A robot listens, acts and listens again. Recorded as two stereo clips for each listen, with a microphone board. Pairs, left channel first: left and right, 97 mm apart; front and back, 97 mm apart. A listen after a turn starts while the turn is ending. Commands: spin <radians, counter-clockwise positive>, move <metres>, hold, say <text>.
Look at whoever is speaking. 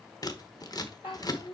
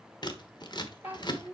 spin 1.92
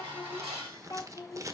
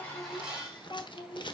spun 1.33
spin 0.61
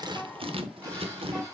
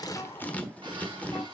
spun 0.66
hold
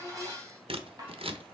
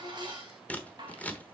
hold
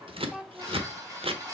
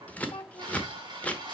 say Facing the child speaking.